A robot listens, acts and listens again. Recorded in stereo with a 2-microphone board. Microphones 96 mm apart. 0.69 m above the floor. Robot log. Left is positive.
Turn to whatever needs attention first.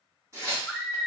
cmd yaw +30
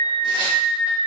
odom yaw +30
note: So it is at 25° right.
cmd yaw -25
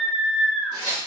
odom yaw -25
note: The scream is now 10° right.
cmd yaw -10
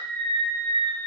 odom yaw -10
end: Found it: a scream, straight ahead, 1 to 2 m away.